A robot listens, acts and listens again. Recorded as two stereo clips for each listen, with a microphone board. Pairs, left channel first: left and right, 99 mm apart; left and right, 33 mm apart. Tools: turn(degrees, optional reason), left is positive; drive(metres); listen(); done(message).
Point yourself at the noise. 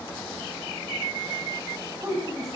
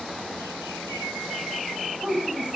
turn(degrees=-35, reason="The woman speaking: about 35° right or 145° right.")
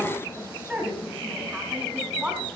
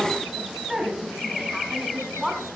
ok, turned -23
turn(degrees=-15, reason="So it is at 15° right.")
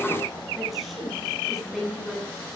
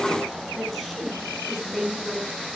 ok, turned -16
done("Found it: a woman speaking, straight ahead.")